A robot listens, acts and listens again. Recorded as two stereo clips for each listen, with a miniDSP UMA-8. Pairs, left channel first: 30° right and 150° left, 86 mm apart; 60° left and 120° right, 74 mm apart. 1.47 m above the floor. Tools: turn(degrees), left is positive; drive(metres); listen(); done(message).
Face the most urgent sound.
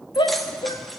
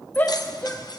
done("Found it: a shout, straight ahead.")